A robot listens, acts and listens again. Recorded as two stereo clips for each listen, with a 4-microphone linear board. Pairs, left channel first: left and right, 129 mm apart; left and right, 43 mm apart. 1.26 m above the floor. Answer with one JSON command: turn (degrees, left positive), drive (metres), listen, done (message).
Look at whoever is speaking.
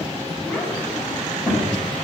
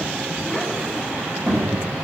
{"turn": 30}
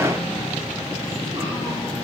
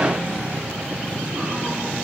{"listen": true}
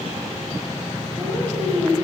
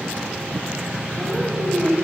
{"turn": -20}
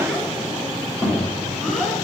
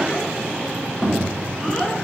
{"done": "Facing the child speaking, 2 to 4 m away."}